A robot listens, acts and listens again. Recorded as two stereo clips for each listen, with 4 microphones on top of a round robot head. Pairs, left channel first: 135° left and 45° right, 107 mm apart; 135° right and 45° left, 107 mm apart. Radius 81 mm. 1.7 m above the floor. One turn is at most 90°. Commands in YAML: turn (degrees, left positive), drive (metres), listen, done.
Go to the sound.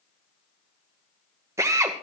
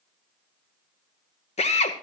turn: -90
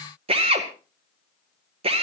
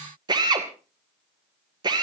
turn: -10
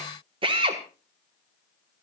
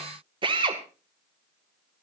drive: 1.0
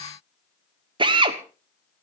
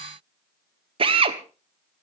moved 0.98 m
drive: 1.0
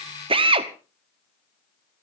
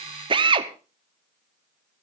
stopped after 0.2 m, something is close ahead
done: "Arrived at the drill, straight ahead."